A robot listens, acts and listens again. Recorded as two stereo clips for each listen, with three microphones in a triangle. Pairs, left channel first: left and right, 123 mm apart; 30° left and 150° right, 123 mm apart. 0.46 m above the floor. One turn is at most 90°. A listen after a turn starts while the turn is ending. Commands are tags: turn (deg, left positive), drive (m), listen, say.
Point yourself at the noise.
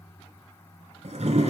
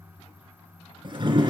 <turn deg="-90"/>
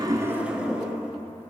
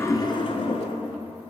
<turn deg="-10"/>
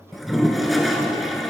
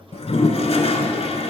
<say>Facing the toilet flushing.</say>